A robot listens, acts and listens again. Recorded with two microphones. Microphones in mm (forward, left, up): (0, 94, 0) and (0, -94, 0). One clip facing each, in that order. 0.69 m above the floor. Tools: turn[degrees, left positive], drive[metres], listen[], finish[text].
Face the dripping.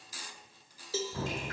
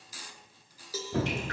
Thought: The dripping: about 75° right or 105° right.
Action: turn[-75]
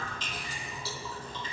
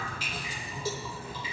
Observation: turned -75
Thought: So it is at 10° right.
Action: turn[-10]
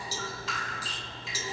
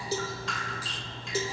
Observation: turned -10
Action: finish[Facing the dripping, under 1 m away.]